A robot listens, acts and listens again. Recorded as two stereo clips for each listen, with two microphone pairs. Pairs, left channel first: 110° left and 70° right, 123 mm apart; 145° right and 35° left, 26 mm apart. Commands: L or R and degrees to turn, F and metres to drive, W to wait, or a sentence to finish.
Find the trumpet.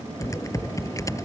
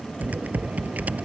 W
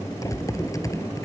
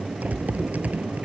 W
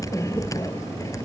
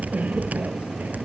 I can't make out a trumpet, only typing on a keyboard.